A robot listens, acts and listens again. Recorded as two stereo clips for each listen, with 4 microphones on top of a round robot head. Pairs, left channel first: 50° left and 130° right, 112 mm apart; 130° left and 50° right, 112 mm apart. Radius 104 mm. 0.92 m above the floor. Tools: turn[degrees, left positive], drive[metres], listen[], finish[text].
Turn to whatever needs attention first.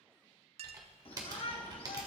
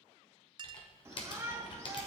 Thought: The shout: 15° left.
Action: turn[15]
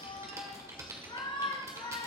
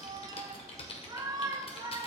Action: finish[Found it: a shout, straight ahead.]